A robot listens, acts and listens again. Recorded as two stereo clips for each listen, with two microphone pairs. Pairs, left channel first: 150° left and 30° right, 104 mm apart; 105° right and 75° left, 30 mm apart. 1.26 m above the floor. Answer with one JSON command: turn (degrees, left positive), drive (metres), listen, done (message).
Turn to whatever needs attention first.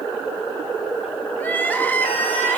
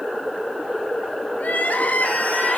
{"turn": -135}
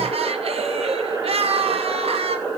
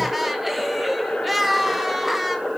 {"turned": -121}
{"turn": -10}
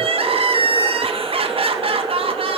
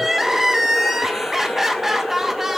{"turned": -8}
{"done": "Facing the crying, 2 to 4 m away."}